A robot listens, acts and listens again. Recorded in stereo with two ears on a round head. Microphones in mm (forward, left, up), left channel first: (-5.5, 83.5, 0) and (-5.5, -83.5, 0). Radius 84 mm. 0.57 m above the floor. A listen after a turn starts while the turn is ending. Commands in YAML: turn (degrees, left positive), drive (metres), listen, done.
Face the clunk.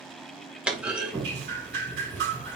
turn: -30
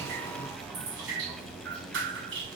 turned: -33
listen: true
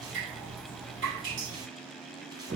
done: "I heard a clunk, but can't make it out now. It was about 25° left or 140° right."